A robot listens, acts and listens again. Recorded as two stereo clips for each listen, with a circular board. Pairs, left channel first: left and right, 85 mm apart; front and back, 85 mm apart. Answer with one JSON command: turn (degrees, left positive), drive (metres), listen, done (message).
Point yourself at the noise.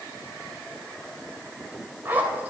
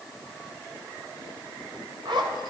{"turn": -160}
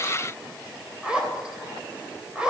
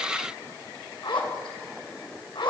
{"turn": -10}
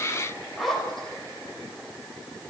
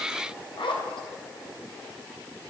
{"done": "Facing the zipper."}